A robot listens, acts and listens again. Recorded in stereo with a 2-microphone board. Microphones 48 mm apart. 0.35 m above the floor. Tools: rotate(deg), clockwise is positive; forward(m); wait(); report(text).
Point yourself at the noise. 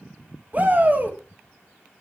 rotate(40)
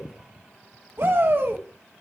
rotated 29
rotate(105)
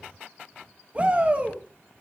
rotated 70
rotate(35)
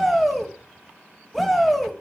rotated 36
report("Facing the shout, 1 to 2 m away.")